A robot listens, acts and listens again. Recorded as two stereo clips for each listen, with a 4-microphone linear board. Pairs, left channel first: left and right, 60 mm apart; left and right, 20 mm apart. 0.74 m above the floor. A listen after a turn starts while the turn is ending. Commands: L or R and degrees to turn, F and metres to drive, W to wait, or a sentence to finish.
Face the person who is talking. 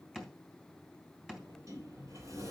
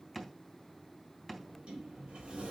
W
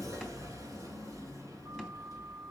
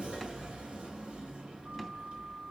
W
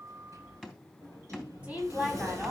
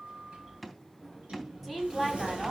R20
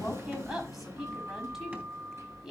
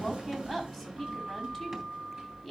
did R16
R30
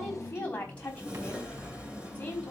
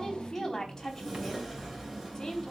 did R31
L25
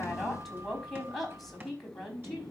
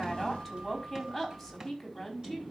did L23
Facing the woman speaking, over 4 m away.